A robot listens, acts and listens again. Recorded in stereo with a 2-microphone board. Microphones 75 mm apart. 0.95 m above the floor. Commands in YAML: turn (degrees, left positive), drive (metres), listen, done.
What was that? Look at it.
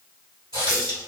turn: -90
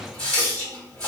turn: 15
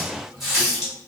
done: "Facing the running tap, 1 to 2 m away."